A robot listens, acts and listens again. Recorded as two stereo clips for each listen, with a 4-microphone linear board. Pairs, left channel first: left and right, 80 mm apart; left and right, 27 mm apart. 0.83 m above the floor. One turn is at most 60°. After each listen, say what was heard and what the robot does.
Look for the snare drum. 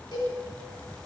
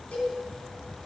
Keep listening.
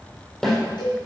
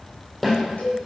Turn 30° left.
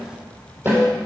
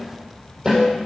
So it is at 25° right. Turn 25° right.
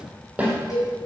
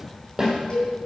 The snare drum is now 15° right. Turn 15° right.
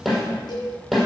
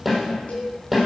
Facing the snare drum.